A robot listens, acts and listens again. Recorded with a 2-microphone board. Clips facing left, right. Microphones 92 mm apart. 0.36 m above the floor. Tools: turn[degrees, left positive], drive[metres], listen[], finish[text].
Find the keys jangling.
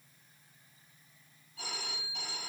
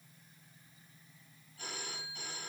Action: listen[]
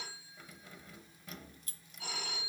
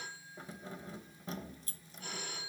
Thought: The keys jangling: about 30° right or 150° right.
Action: turn[-30]
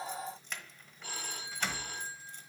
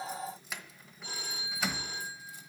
Action: finish[Facing the keys jangling, 1 to 2 m away.]